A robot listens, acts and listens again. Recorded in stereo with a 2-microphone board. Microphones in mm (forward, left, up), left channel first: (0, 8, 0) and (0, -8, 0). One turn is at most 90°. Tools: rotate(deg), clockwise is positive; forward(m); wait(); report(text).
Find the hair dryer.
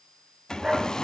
rotate(-45)
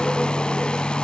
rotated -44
rotate(-90)
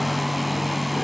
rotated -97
report("Facing the hair dryer, 1 to 2 m away.")